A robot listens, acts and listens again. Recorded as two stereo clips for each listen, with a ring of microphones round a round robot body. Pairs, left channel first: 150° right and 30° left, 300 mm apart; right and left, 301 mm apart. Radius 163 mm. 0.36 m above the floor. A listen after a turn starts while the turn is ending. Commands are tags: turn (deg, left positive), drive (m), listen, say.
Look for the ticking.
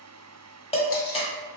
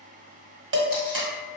<listen/>
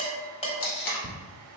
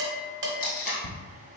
<turn deg="-55"/>
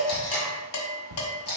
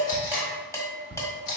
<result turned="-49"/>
<say>Found it: ticking, straight ahead, under 1 m away.</say>